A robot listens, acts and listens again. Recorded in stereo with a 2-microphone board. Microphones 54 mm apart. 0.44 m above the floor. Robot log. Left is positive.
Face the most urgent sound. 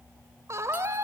note: The scream: about 60° right or 120° right.
cmd yaw -60
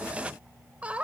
note: So it is at 25° right.
cmd yaw -25
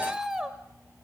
note: The scream is now 10° right.
cmd yaw -10
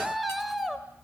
end: Found it: a scream, straight ahead, 1 to 2 m away.